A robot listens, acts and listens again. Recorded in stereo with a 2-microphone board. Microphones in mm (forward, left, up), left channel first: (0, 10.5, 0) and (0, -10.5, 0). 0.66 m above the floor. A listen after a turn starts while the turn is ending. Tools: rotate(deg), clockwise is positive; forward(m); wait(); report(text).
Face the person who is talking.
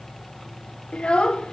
rotate(-55)
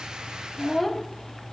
rotate(-10)
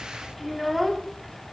report("Found it: a child speaking, straight ahead.")